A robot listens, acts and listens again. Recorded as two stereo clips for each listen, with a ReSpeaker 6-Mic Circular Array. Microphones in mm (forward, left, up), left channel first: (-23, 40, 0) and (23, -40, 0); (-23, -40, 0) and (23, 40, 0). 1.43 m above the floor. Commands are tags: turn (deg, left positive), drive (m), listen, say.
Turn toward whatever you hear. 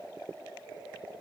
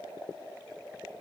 <listen/>
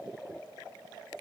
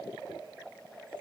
<listen/>
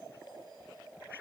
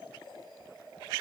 <say>I can't make out anything.</say>